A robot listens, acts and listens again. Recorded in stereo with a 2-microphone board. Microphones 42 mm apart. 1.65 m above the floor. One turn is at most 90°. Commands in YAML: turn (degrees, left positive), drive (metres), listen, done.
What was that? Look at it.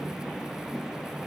listen: true
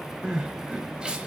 turn: -20
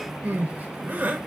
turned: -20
turn: -90
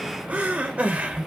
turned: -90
turn: -35
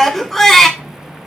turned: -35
done: "Facing the crying."